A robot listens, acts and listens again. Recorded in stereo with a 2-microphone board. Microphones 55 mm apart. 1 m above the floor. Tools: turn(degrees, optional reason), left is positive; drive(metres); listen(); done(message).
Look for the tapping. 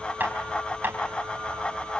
turn(degrees=-35, reason="The tapping: about 35° right or 145° right.")
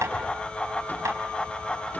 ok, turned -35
turn(degrees=-110, reason="So it is at 110° right.")
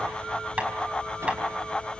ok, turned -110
turn(degrees=-20, reason="The tapping is now 20° right.")
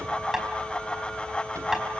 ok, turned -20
turn(degrees=-10, reason="The tapping is now 10° right.")
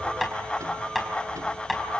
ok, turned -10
done("Facing the tapping.")